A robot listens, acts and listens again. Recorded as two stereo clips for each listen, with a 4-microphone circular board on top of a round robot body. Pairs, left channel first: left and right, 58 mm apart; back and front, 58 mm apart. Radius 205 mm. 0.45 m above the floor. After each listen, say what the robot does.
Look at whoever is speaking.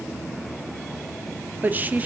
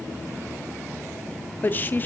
Turn 140° right.
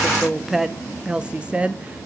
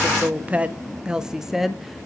Turn 85° right.
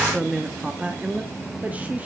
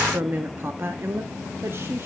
Turn 35° right.
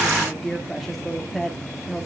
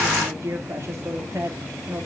Facing the woman speaking, 1 to 2 m away.